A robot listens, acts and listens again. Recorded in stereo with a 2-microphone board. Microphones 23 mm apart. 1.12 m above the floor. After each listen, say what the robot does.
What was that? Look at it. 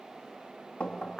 Turn 90° left.
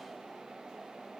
Keep listening.
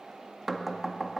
Facing the knocking, 1 to 2 m away.